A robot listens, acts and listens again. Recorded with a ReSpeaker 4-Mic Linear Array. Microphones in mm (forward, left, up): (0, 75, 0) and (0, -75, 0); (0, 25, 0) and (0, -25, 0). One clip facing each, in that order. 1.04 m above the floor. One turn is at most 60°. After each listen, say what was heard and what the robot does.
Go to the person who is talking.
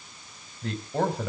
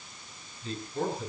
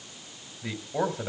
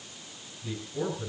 The man speaking: about 70° left or 110° left. Turn 60° left.
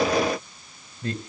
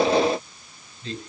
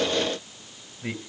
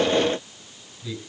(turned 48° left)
So it is at 65° left. Turn 60° left.
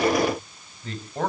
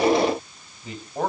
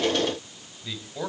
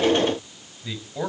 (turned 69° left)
Drive 1.0 m forward.
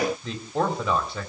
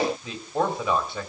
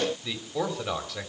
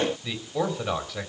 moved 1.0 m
Drive 1.0 m forward.
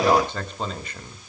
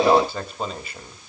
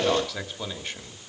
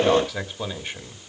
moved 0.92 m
The man speaking is now 10° right. Turn 10° right.
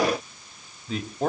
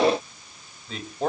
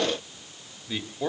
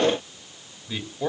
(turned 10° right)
Drive 1.0 m forward.
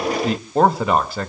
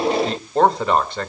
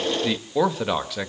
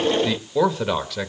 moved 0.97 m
Drive 1.0 m forward.
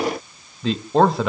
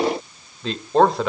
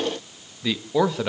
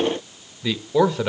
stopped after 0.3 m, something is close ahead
I am next to the man speaking.